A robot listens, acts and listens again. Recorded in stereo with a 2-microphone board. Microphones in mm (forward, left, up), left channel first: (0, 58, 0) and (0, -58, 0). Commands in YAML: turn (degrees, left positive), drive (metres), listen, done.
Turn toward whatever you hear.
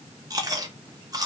turn: -30
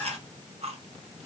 turn: -115
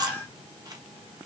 turn: -35
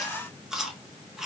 done: "Found it: chewing, straight ahead."